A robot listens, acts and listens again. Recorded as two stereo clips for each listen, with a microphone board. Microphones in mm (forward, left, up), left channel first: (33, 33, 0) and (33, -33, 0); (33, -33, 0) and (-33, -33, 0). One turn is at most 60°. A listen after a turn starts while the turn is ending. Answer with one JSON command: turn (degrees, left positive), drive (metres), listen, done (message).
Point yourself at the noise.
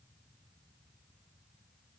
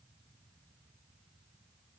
{"listen": true}
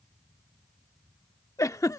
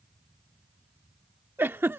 {"turn": 60}
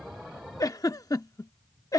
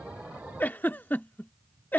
{"turn": 60}
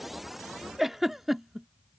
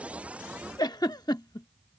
{"done": "Found it: a giggle, straight ahead."}